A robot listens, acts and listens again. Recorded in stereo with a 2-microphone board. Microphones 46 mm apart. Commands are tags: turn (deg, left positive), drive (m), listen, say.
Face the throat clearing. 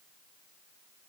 <listen/>
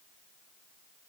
<listen/>
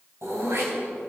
<turn deg="-75"/>
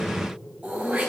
<turn deg="-30"/>
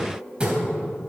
<turn deg="-20"/>
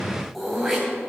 <say>Found it: throat clearing, straight ahead.</say>